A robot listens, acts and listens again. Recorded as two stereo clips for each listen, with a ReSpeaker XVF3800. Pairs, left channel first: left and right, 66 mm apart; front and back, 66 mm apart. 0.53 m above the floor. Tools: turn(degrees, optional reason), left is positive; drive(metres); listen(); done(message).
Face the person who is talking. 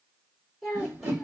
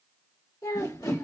done("Facing the child speaking.")